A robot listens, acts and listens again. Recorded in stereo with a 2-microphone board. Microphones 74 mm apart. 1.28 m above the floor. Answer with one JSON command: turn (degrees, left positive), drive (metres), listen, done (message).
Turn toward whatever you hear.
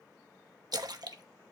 {"turn": -65}
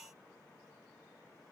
{"listen": true}
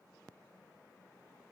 {"done": "I heard a splash, but can't make it out now. It was about straight ahead or 50° right."}